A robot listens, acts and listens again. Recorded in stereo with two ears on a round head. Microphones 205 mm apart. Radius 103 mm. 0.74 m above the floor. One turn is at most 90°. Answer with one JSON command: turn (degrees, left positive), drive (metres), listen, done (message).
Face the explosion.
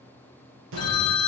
{"turn": -60}
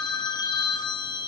{"listen": true}
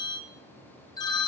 {"done": "I heard an explosion, but can't make it out now. It was about straight ahead or 60° right."}